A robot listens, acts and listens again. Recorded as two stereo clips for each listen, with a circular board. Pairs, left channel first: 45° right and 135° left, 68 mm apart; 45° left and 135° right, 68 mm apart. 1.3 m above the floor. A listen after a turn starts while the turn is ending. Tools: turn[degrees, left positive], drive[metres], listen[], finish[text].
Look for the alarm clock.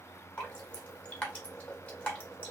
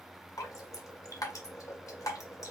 Action: listen[]
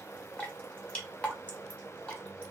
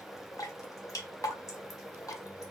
Action: listen[]
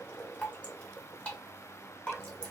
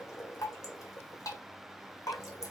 Action: finish[I can't make out an alarm clock, only dripping.]